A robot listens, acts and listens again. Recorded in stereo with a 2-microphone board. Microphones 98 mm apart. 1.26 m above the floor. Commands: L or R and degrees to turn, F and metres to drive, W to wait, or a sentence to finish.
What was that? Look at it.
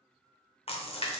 L90
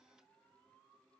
I heard a splash from this way, but can't make it out now.